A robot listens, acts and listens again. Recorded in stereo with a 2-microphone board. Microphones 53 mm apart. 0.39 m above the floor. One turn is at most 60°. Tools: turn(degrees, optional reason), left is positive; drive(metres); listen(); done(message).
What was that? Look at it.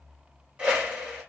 turn(degrees=-20, reason="The whoosh: about 20° right or 160° right.")
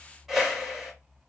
done("Facing the whoosh.")